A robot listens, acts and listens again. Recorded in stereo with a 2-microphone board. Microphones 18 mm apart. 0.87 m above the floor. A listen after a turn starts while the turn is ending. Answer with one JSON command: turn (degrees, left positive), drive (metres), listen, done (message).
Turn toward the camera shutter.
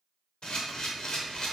{"turn": 60}
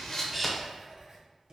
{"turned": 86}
{"listen": true}
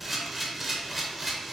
{"turn": -10}
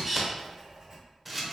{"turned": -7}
{"done": "Found it: a camera shutter, straight ahead, under 1 m away."}